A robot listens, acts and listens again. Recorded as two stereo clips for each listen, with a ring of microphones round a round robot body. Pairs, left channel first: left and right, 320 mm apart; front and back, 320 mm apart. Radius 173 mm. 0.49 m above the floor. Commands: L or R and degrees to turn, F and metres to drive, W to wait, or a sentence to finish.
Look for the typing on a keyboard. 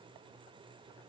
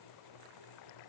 W
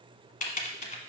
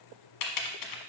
L25
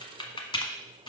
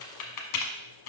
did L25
L15
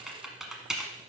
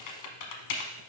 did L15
Found it: typing on a keyboard, straight ahead, 1 to 2 m away.